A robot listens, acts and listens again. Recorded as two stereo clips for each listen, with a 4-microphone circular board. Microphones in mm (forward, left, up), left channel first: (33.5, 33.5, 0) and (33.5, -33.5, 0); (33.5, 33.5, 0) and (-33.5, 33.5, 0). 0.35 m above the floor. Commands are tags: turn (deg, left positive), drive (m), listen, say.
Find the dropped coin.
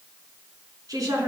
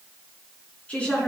<listen/>
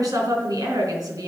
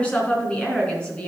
<listen/>
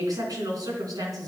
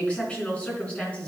<say>I can't make out a dropped coin, only a woman speaking.</say>